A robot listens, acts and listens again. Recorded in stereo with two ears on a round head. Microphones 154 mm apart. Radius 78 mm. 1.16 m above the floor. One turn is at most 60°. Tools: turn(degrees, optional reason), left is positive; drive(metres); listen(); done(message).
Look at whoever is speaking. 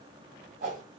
listen()
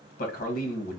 turn(degrees=55, reason="The man speaking: about 55° left or 125° left.")
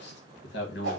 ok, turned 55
turn(degrees=60, reason="So it is at 70° left.")
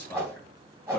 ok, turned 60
turn(degrees=10, reason="The man speaking is now 10° left.")
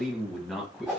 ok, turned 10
done("Facing the man speaking, 1 to 2 m away.")